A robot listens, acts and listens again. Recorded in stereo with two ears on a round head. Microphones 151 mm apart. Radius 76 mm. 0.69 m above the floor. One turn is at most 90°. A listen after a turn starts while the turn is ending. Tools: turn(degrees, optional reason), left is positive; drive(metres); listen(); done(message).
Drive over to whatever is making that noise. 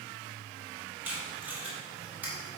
turn(degrees=-30)
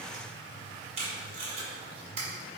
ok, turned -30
turn(degrees=-90, reason="So it is at 135° right.")
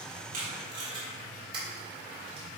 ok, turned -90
turn(degrees=-30, reason="The tape being pulled is now 30° right.")
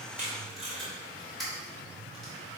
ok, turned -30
drive(metres=1.0)
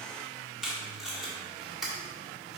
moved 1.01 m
drive(metres=1.0)
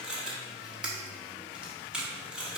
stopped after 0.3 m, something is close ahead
done("Arrived at the tape being pulled, straight ahead.")